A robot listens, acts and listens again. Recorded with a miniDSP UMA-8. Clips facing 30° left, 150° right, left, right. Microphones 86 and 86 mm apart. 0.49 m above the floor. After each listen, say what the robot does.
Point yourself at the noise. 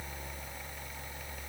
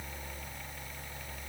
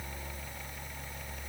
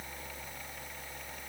Keep listening.
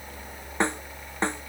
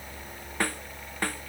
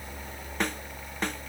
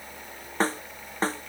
Turn 35° right.
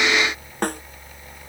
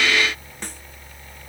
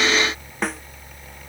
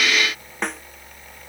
Facing the snare drum.